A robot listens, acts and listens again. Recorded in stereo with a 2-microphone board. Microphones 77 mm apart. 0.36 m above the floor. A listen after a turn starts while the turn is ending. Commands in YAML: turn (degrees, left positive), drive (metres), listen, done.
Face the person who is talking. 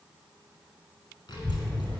turn: 65
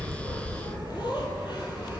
turn: 70
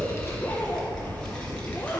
turn: 15
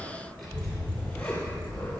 done: "Found it: a child speaking, straight ahead."